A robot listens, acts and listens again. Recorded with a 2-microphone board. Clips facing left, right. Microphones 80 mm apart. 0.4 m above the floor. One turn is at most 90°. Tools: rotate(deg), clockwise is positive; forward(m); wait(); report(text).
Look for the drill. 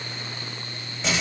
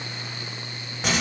wait()
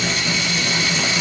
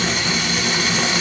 wait()
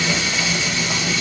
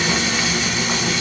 report("I can't make out a drill to turn to.")